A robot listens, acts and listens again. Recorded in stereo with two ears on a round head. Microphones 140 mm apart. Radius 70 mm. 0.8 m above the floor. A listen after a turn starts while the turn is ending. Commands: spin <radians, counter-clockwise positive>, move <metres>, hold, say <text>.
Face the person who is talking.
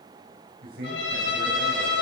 spin -1.57
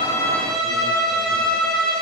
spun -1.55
hold
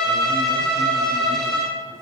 hold
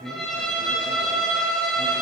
spin 0.17
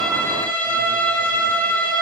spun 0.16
hold
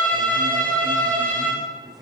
say Facing the man speaking.